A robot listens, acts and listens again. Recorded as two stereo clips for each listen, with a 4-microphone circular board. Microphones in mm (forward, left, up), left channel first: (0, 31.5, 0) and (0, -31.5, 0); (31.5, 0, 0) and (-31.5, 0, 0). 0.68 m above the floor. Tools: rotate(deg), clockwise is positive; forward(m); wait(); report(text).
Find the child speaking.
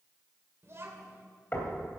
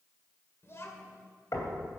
rotate(40)
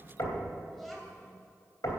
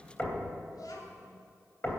report("Found it: a child speaking, straight ahead.")